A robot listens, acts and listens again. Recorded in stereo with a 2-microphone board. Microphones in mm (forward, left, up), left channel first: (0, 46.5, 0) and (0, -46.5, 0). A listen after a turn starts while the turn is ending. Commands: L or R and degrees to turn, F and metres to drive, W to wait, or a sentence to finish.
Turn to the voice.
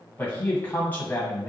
L20
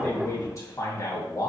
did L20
L135
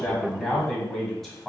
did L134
Facing the man speaking.